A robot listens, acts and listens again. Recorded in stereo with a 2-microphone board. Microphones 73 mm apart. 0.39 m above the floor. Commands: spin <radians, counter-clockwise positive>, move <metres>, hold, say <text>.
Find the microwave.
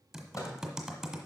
spin 0.87
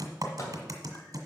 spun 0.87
spin 1.05
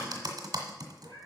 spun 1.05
hold
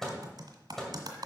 say Facing the microwave, 1 to 2 m away.